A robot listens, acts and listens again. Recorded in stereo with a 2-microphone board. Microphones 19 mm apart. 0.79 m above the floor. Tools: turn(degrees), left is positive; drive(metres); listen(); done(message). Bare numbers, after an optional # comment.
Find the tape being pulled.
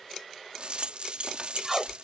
# The tape being pulled: about 20° right or 160° right.
turn(-20)
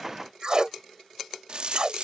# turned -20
# So it is at 140° right.
turn(-140)
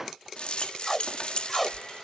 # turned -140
done("Facing the tape being pulled.")